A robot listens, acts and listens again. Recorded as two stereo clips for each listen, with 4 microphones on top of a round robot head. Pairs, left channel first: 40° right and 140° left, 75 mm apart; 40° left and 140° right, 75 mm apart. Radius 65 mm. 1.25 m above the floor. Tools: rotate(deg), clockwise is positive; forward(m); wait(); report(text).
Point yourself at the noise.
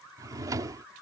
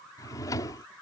rotate(-90)
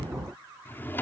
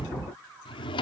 rotate(-25)
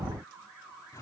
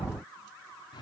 rotate(-10)
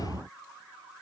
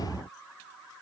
wait()
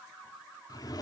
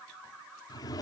report("Facing the drawer.")